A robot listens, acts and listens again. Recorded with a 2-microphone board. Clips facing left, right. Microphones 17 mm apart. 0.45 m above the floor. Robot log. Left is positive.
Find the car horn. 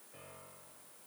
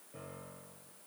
cmd idle
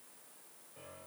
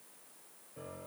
cmd idle
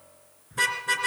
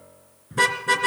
cmd yaw -30
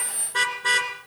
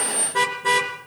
note: So it is at 25° left.
cmd yaw +25
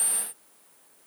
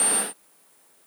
cmd idle
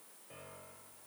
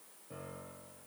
cmd idle
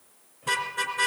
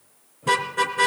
end: Found it: a car horn, straight ahead, 2 to 4 m away.